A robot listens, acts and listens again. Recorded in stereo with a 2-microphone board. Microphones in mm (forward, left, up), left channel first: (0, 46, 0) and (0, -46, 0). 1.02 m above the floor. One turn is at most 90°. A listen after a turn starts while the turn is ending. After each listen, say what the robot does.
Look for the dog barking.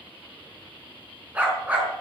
Turn 30° right.
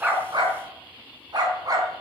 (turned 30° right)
Turn 90° right.
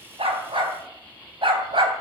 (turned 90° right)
Turn 70° right.
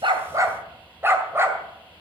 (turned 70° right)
Turn 25° right.
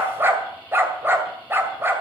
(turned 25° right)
Turn 25° right.
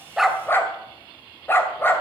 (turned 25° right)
Turn 25° left.
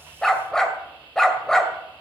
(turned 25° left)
Facing the dog barking, 2 to 4 m away.